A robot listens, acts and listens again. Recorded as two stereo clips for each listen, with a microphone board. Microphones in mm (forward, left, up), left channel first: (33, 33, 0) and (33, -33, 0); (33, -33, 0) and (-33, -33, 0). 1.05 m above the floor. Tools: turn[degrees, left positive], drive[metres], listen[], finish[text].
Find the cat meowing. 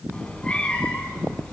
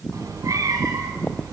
Thought: The cat meowing: 160° left.
Action: turn[160]
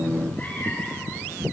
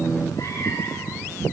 Thought: The cat meowing is now 30° left.
Action: turn[30]
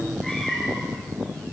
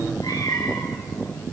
Action: finish[Facing the cat meowing.]